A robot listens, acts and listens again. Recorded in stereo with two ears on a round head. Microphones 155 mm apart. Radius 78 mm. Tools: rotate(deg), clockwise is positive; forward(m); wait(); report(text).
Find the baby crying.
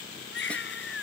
rotate(-65)
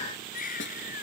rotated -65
rotate(-50)
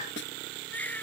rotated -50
rotate(-10)
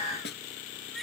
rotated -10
wait()
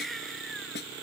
report("Found it: a baby crying, straight ahead.")